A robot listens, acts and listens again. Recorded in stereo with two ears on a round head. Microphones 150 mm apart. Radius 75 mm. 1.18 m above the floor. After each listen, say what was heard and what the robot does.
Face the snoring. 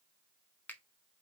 Keep listening.
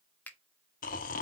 The snoring: about 50° left or 130° left. Turn 50° left.
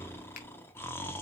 So it is at 15° left. Turn 15° left.
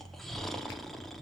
Found it: snoring, straight ahead, 1 to 2 m away.